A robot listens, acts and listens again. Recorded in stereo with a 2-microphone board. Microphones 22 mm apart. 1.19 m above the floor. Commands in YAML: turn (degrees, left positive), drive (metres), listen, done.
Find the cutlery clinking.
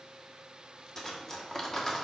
turn: 15
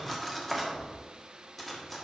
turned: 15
done: "Found it: cutlery clinking, straight ahead, 1 to 2 m away."